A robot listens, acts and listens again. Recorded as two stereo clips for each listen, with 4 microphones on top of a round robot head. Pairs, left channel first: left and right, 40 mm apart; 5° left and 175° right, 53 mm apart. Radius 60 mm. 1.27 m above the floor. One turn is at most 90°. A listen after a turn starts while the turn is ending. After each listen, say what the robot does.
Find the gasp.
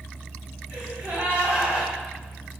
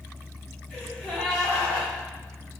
Turn 75° right.
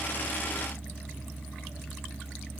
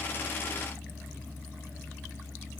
I heard a gasp from this way, but can't make it out now.